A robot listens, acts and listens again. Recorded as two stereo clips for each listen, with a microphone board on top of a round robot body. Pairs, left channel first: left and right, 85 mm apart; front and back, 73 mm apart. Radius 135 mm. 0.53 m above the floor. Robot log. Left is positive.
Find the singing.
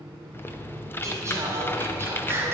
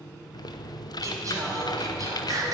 note: The singing: 150° right.
cmd yaw -150
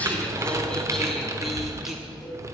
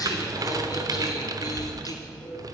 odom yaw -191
end: Facing the singing, 2 to 4 m away.